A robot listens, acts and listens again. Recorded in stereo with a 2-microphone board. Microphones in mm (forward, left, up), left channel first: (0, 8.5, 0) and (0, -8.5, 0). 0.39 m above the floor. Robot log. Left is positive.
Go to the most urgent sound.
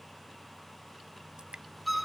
cmd idle
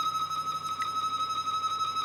cmd idle
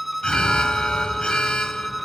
cmd yaw +90
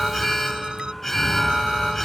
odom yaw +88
note: So it is at 10° left.
cmd yaw +10
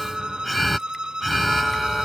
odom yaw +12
cmd fwd 1.0
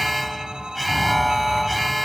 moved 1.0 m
cmd fwd 1.0
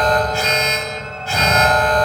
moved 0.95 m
cmd fwd 1.0
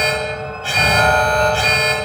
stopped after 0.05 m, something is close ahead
end: I am next to the alarm.